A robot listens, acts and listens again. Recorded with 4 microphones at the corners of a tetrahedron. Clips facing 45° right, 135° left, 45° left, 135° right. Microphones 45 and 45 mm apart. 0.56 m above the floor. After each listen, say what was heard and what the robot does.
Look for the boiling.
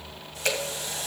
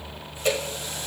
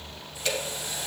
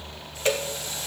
Keep listening.
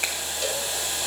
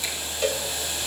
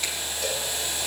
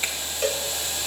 The boiling: 30° right. Turn 30° right.
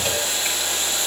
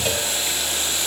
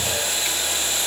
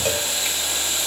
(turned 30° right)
Facing the boiling.